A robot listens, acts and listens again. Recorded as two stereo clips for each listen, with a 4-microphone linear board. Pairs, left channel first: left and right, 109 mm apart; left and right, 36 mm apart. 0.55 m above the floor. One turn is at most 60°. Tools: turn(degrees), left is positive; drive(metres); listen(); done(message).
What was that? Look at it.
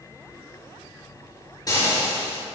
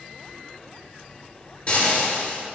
turn(degrees=35)
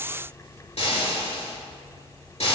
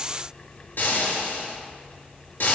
turn(degrees=60)
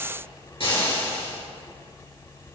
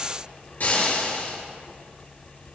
turn(degrees=60)
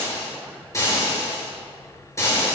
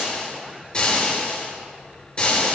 turn(degrees=30)
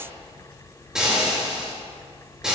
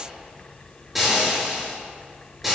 done("Facing the frying.")